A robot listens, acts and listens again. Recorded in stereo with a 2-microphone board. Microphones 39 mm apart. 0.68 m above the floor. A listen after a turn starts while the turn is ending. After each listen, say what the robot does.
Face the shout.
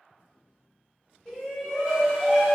Turn 25° left.
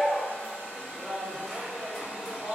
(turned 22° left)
Facing the shout.